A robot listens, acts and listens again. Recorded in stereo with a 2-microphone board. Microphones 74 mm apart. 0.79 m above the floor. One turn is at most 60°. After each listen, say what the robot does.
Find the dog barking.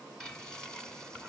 Keep listening.
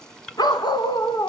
Turn 60° left.
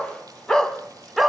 Found it: a dog barking, straight ahead, 1 to 2 m away.